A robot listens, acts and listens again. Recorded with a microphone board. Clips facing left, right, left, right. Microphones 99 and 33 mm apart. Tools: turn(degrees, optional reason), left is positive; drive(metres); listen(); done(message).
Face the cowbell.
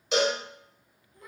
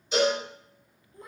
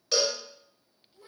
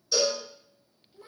turn(degrees=90)
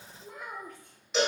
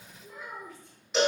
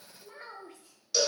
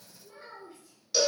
done("Found it: a cowbell, straight ahead, 1 to 2 m away.")